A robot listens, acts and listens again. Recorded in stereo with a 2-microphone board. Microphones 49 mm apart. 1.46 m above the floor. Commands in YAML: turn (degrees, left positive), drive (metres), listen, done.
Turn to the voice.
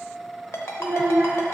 turn: -55
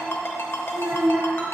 turn: -65
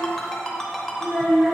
turn: -20
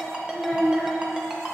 done: "Found it: a child speaking, straight ahead."